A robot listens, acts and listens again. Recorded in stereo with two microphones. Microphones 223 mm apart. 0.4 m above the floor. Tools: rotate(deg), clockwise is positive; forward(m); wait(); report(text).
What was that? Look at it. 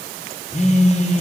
rotate(-30)
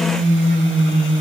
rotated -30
rotate(-120)
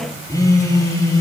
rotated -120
rotate(-15)
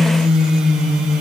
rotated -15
report("Found it: a phone buzzing, straight ahead.")